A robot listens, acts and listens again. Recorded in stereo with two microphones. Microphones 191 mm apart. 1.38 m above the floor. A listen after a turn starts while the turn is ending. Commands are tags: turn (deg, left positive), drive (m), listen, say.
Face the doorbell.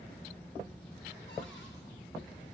<listen/>
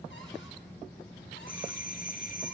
<turn deg="45"/>
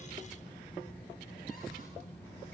<listen/>
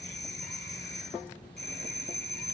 <turn deg="80"/>
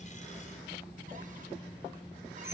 <listen/>
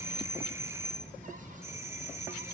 <turn deg="-15"/>
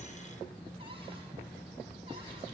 <listen/>
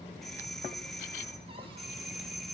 <say>Facing the doorbell.</say>